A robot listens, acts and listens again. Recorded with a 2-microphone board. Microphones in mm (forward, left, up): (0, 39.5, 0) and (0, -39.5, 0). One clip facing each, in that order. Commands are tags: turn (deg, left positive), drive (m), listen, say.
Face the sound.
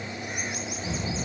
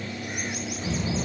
<turn deg="-65"/>
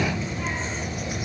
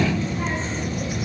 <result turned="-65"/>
<turn deg="-30"/>
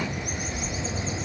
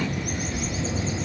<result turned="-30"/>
<say>Facing the child speaking.</say>